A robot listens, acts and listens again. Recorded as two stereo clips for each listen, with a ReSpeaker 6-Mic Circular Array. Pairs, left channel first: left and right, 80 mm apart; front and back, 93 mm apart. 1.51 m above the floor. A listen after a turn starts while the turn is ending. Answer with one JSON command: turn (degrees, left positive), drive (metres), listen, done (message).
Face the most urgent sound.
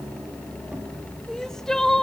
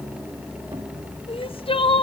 {"done": "Facing the crying, under 1 m away."}